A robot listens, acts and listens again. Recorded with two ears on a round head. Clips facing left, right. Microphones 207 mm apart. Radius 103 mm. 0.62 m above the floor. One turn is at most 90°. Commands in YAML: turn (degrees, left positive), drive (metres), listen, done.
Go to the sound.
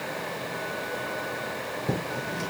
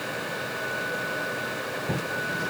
turn: 40
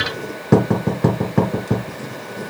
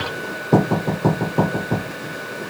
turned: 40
turn: 90
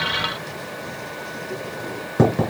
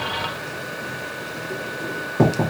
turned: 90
turn: 40
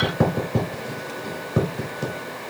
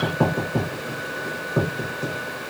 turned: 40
turn: 40
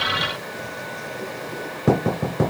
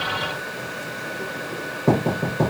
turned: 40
turn: 25
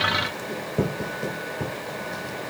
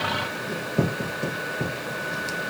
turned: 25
drive: 1.0
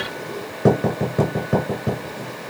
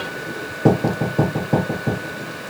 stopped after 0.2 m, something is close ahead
turn: 10
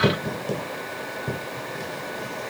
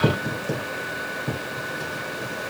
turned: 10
done: "Something is in my way. I am facing the writing but have not reached it."